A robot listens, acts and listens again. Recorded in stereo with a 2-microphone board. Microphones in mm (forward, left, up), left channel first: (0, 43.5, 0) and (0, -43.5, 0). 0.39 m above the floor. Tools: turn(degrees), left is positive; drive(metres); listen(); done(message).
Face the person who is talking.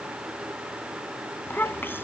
turn(degrees=25)
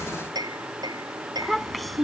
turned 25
done("Found it: a child speaking, straight ahead.")